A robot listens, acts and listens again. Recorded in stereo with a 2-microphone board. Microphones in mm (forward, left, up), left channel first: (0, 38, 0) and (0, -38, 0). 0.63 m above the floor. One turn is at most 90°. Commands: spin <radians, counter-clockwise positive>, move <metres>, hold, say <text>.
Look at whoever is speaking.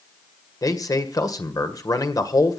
spin 0.87
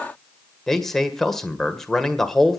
say Facing the man speaking, 1 to 2 m away.